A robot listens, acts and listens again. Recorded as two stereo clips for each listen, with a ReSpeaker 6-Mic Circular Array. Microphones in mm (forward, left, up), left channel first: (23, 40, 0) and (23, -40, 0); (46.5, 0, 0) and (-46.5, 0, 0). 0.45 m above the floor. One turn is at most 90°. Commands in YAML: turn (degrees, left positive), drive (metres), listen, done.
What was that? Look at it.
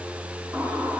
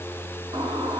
turn: -90
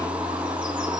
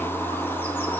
turn: -70
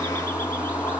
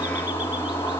turn: 35
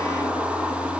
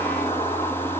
done: "Facing the bird, 2 to 4 m away."